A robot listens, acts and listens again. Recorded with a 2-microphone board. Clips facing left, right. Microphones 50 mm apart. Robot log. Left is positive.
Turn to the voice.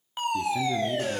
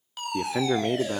note: The man speaking: about 55° right or 125° right.
cmd yaw -55
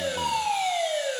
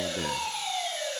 cmd idle
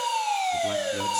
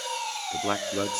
note: So it is at 50° right.
cmd yaw -50
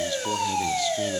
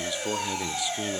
note: The man speaking is now 10° right.
cmd yaw -10
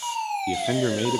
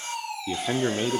end: Facing the man speaking, under 1 m away.